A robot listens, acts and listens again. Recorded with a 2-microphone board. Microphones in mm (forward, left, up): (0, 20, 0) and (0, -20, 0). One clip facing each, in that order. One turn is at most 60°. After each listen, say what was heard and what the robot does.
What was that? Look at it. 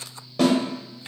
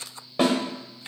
The snare drum: about 25° right or 155° right. Turn 25° right.
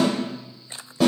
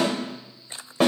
So it is at 130° right. Turn 60° right.
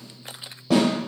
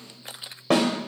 The snare drum is now 100° right. Turn 60° right.
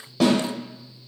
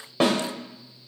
The snare drum is now 45° right. Turn 45° right.
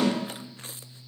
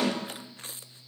Keep listening.
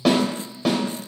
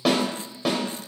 Facing the snare drum, under 1 m away.